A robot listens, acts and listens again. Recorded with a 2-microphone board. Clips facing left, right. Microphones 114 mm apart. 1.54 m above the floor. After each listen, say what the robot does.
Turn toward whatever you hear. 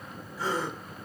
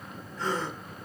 Turn 30° left.
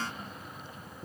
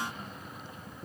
Keep listening.
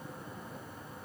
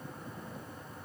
I heard a gasp, but can't make it out now. It was about 20° right or 140° left.